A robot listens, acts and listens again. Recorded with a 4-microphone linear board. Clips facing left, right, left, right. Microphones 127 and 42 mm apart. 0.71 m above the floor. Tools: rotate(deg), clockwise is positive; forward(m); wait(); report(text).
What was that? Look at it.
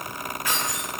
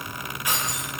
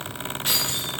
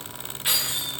rotate(20)
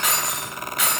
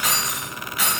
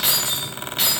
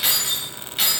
rotate(30)
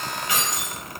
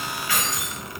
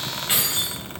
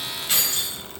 rotate(-20)
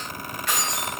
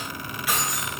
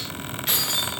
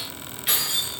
rotate(10)
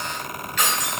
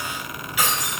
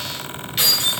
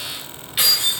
rotate(10)
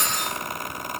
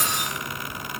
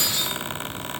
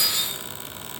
report("Facing the keys jangling, 2 to 4 m away.")